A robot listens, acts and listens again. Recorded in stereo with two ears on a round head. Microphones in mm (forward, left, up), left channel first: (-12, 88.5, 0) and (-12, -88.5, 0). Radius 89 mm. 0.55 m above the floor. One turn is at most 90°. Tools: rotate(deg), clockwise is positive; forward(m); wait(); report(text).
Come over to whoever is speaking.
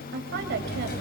rotate(60)
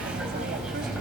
wait()
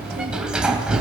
wait()
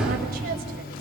report("I heard a woman speaking, but can't make it out now. It was about straight ahead or 60° right. I did not reach it.")